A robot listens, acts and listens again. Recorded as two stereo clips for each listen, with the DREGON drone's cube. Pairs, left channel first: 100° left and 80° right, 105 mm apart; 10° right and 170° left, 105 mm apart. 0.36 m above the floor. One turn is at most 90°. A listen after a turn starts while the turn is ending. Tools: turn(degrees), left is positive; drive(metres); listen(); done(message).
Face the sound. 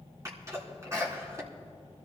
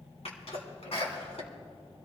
turn(degrees=-20)
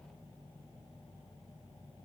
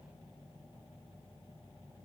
done("I heard a sneeze from this way, but can't make it out now.")